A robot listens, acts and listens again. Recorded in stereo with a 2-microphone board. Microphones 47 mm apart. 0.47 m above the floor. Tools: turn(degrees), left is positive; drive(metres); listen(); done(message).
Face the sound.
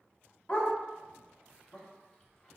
turn(degrees=20)
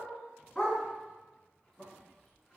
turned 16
turn(degrees=30)
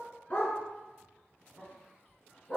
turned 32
turn(degrees=25)
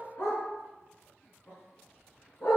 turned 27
turn(degrees=130)
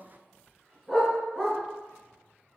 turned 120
done("Found it: a dog barking, straight ahead.")